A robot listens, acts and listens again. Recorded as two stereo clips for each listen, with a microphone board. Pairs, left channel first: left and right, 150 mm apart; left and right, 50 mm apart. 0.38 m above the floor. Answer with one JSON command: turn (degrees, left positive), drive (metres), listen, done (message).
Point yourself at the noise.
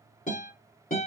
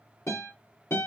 {"turn": 65}
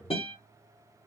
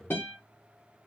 {"turn": 40}
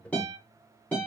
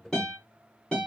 {"turn": 10}
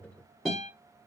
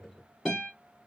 {"done": "Found it: a guitar, straight ahead."}